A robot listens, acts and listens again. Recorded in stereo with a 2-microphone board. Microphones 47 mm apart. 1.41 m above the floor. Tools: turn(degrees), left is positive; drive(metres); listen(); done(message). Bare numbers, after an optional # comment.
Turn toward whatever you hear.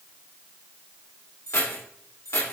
# The keys jangling: about 75° left or 105° left.
turn(75)
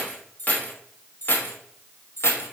# So it is at 65° left.
turn(65)
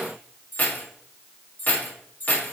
# The keys jangling is now 40° left.
turn(40)
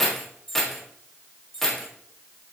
# The keys jangling is now 10° left.
turn(10)
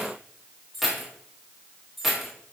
done("Facing the keys jangling.")